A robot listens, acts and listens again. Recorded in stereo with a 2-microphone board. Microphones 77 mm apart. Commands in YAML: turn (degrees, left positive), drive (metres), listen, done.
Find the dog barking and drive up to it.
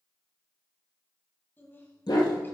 turn: 65
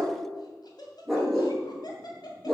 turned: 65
drive: 1.0
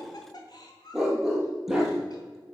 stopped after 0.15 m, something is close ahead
done: "Blocked. The dog barking is further on, straight ahead."